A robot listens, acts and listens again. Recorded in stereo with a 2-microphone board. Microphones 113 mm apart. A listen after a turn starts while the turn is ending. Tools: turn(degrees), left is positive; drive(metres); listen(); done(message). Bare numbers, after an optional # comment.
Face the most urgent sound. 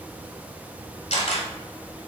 listen()
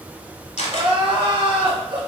# The crying: about 55° right or 125° right.
turn(-55)
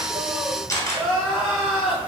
done("Found it: crying, straight ahead.")